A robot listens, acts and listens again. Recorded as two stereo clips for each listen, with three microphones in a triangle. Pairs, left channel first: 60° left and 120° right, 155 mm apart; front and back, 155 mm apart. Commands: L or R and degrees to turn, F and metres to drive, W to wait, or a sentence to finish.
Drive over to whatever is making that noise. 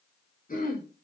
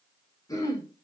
L65
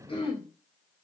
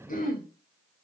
L10
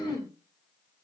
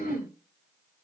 F1.0
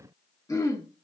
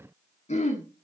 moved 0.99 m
F1.0
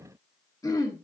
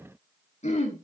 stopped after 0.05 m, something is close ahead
I am next to the throat clearing.